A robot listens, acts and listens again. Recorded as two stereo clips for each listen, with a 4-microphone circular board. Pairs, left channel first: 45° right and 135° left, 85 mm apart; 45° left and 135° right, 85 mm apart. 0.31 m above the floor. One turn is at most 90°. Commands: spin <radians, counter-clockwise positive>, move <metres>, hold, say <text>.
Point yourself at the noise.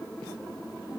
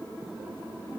hold
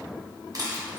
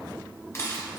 spin 1.57
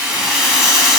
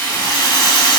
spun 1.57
spin 0.87
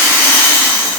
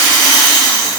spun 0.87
spin 0.17
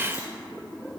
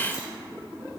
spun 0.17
hold
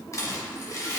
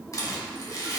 say Facing the rattle.